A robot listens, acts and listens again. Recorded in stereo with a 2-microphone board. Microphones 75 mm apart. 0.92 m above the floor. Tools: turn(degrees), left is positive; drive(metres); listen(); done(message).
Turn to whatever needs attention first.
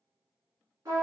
listen()
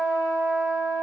listen()
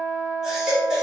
turn(degrees=-30)
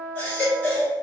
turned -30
turn(degrees=25)
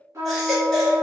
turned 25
done("Facing the baby crying, 1 to 2 m away.")